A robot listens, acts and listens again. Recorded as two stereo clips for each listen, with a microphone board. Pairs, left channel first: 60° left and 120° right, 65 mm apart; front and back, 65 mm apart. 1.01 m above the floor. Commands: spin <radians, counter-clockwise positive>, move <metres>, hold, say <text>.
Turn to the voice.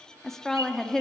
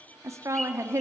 spin 2.53
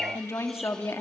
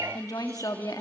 spin 0.26
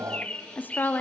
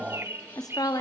say Facing the woman speaking, 2 to 4 m away.